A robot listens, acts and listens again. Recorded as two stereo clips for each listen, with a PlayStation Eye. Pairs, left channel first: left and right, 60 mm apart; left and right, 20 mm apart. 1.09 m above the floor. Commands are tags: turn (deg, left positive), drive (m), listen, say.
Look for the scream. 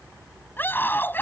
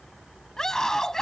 <turn deg="30"/>
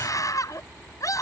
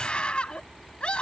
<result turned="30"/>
<turn deg="120"/>
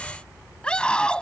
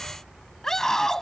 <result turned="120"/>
<turn deg="15"/>
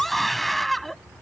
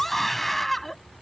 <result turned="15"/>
<say>Found it: a scream, straight ahead.</say>